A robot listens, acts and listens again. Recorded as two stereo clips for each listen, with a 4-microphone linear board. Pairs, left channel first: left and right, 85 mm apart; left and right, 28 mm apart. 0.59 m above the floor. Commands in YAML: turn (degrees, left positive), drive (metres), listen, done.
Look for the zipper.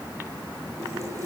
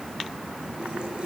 listen: true
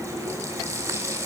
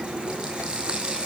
listen: true
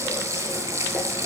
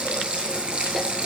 done: "I can't make out a zipper, only a running tap."